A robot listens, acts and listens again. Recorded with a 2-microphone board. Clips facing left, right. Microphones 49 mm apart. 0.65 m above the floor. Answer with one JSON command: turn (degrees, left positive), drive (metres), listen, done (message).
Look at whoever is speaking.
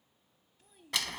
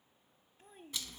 {"turn": -35}
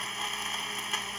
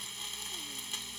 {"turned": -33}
{"listen": true}
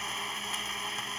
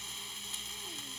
{"listen": true}
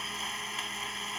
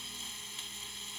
{"done": "I heard a child speaking, but can't make it out now. It was about 5° right or 110° right."}